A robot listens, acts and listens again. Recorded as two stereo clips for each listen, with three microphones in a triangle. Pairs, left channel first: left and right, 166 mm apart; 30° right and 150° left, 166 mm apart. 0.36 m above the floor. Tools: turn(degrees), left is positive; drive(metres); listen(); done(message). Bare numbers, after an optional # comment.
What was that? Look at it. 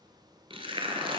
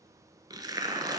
# The tearing paper: 145° right.
turn(-145)
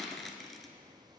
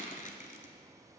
done("Found it: tearing paper, straight ahead, under 1 m away.")